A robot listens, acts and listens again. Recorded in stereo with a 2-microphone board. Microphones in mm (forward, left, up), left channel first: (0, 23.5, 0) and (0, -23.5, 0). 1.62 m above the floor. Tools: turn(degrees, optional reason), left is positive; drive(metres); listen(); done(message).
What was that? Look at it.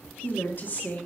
turn(degrees=35, reason="The woman speaking: about 35° left or 145° left.")
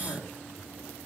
turn(degrees=115, reason="So it is at 115° left.")
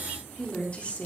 turn(degrees=30, reason="The woman speaking is now 30° left.")
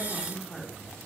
turn(degrees=10, reason="The woman speaking is now 10° left.")
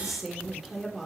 done("Facing the woman speaking.")